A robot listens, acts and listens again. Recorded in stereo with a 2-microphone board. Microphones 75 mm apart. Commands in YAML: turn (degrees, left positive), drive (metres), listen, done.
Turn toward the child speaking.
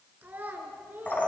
turn: -25
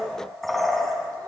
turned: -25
listen: true
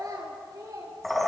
turn: -125
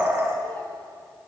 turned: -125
listen: true
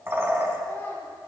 listen: true
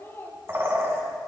turn: 30
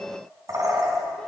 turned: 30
listen: true
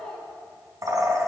turn: 10
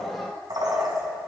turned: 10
done: "Facing the child speaking."